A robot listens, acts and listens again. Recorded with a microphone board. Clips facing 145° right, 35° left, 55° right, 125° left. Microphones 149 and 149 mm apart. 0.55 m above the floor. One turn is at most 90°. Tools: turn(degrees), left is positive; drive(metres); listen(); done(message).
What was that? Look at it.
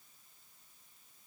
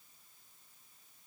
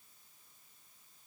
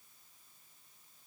listen()
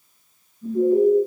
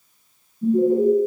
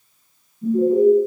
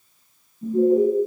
turn(degrees=70)
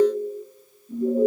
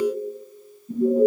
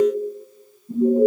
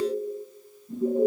turn(degrees=10)
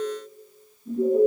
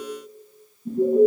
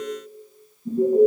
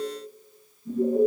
done("Found it: an alarm, straight ahead, over 4 m away.")